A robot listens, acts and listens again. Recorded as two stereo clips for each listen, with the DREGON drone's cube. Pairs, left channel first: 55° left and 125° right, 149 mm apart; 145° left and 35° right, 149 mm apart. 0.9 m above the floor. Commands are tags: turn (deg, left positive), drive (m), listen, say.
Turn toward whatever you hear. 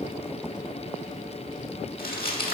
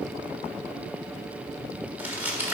<turn deg="45"/>
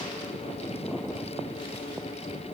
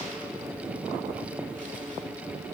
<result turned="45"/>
<listen/>
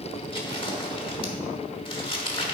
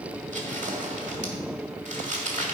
<say>Found it: crumpling, straight ahead, 1 to 2 m away.</say>